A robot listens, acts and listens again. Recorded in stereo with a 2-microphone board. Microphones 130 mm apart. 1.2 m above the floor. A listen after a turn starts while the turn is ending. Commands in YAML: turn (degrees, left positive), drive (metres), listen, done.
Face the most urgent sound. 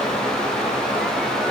listen: true
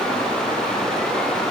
listen: true
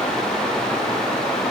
done: "I can't make out anything urgent to turn to."